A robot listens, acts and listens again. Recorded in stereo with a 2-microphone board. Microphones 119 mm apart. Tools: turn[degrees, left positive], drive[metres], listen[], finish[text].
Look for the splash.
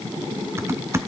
Action: listen[]
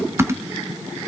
Action: listen[]
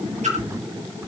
Action: turn[-90]
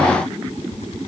Action: finish[I heard a splash from this way, but can't make it out now.]